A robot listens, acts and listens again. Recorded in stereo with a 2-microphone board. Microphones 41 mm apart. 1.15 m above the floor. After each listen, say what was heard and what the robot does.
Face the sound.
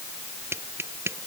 Turn 90° right.
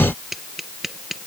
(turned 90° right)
Facing the tapping.